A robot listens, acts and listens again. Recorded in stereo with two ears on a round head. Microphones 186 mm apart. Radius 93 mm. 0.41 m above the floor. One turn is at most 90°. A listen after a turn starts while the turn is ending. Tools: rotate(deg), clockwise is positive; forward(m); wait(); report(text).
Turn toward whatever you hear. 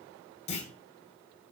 rotate(-35)
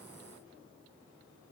wait()
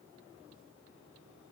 report("I heard a clunk, but can't make it out now. It was about straight ahead or 110° left.")